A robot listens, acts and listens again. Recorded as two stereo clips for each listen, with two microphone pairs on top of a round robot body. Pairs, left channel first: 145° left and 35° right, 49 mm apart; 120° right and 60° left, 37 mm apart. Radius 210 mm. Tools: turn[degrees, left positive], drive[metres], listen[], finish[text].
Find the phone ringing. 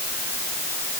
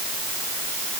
Action: listen[]
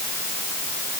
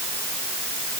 Action: listen[]
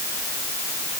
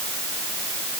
Action: finish[I can't make out a phone ringing.]